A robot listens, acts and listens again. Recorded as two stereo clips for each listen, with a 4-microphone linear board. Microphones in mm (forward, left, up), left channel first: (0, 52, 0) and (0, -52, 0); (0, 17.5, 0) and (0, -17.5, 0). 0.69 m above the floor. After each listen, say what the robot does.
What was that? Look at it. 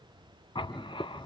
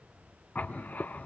Turn 60° left.
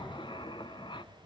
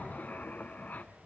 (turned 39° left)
Turn 65° left.
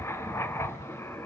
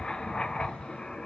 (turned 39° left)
Turn 30° left.
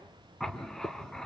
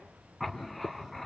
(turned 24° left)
Facing the writing.